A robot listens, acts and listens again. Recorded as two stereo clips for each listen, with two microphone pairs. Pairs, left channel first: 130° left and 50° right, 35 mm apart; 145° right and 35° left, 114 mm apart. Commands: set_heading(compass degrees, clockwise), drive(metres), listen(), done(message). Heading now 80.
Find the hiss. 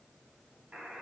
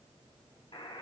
listen()
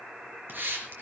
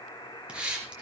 set_heading(125)
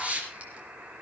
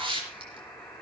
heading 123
done("Facing the hiss, 2 to 4 m away.")